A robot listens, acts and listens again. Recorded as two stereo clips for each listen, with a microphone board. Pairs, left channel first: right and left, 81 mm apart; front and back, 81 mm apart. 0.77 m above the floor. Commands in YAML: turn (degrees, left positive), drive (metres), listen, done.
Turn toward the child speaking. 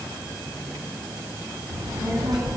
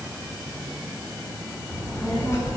turn: 55
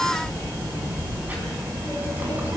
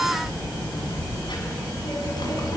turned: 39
turn: 25
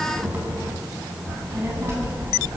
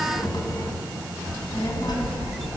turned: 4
turn: 30
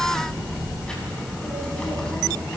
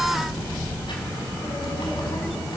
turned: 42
turn: -10
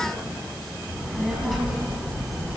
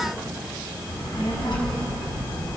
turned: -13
done: "Facing the child speaking."